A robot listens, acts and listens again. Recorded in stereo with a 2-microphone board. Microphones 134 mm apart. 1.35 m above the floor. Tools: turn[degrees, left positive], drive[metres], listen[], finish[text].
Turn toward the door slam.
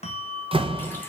Thought: The door slam: about 40° right or 140° right.
Action: turn[-40]
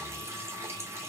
Action: listen[]
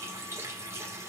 Action: finish[I heard a door slam, but can't make it out now. It was about straight ahead or 100° right.]